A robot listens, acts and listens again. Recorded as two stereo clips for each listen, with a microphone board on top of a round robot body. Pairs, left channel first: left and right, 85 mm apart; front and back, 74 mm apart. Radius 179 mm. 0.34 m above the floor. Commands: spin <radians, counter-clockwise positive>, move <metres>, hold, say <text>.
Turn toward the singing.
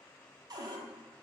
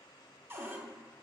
hold
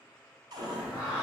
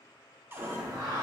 spin -2.97
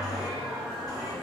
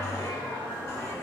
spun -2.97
say Facing the singing.